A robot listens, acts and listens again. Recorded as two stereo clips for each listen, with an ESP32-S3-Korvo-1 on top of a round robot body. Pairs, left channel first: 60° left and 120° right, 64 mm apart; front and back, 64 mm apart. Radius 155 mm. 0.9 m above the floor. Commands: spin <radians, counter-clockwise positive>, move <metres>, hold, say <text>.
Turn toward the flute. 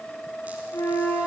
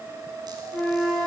spin 1.48
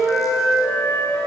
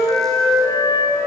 say Facing the flute.